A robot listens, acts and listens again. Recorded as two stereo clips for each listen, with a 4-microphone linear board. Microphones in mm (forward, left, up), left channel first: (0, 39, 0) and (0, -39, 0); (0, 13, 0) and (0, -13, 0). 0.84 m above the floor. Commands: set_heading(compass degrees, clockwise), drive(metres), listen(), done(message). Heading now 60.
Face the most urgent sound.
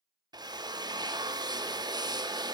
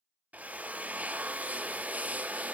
listen()
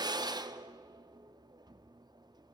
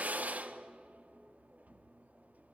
listen()
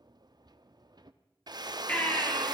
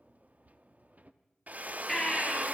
set_heading(45)
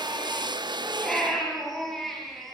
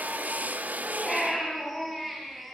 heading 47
done("Facing the baby crying, over 4 m away.")